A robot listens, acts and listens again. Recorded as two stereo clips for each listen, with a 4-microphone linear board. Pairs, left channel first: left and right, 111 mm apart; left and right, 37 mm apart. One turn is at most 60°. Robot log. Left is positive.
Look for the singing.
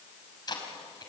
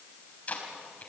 cmd idle
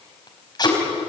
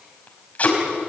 cmd idle
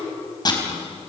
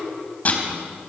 end: I can't make out singing to turn to.